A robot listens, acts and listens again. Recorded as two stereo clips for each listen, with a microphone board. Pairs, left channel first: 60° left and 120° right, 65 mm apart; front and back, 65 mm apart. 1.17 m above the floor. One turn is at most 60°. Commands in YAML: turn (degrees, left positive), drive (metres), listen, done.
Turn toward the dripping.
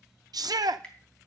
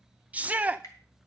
turn: -10
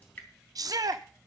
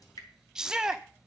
done: "Found it: dripping, straight ahead."